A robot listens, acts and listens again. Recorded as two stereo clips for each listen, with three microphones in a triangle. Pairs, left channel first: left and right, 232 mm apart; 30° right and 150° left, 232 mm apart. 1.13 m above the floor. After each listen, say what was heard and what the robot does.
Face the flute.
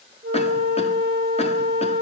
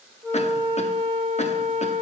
The flute: 135° right. Turn 135° right.
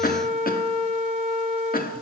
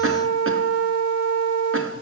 The flute is now 25° right. Turn 25° right.
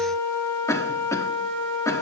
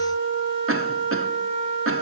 Facing the flute.